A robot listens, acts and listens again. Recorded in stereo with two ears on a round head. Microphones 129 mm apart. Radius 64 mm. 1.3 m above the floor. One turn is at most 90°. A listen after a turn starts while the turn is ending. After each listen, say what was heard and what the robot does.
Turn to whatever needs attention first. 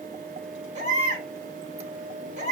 The baby crying: about 55° right or 125° right. Turn 55° right.
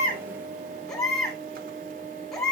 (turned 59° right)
Facing the baby crying.